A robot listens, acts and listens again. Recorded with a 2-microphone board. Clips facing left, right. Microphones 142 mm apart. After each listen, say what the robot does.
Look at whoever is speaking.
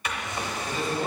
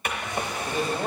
Turn 55° right.
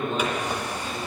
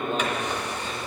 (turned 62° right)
Turn 55° right.
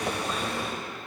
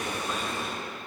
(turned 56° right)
Keep listening.
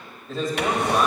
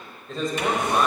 Facing the man speaking.